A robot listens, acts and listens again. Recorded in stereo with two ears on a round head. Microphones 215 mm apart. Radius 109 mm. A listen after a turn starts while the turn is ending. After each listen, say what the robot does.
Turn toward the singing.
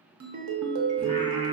Turn 25° right.
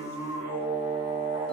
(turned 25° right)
Turn 15° right.
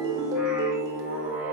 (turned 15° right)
Turn 30° right.
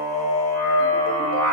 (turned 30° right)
Turn 10° left.
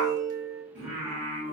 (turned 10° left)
Found it: singing, straight ahead.